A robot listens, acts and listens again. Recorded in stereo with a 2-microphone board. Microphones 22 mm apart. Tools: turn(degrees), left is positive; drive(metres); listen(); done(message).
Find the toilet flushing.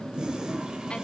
turn(degrees=-45)
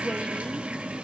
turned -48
listen()
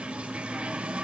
turn(degrees=-85)
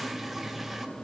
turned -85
listen()
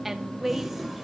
done("Facing the toilet flushing.")